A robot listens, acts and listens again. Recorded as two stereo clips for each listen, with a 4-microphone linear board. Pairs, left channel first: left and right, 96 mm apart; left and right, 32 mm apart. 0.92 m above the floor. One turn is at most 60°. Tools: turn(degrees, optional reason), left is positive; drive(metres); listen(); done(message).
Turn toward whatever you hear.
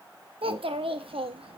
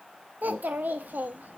turn(degrees=-60)
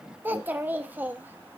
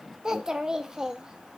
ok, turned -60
turn(degrees=-20, reason="So it is at 20° right.")
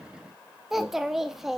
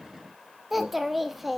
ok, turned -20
done("Facing the child speaking.")